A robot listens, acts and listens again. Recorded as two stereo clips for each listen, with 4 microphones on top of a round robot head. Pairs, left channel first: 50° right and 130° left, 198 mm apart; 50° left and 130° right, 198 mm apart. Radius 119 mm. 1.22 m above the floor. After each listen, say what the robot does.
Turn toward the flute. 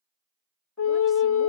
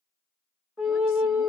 Turn 45° right.
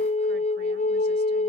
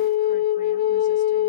Turn 10° left.
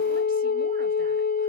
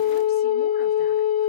Facing the flute.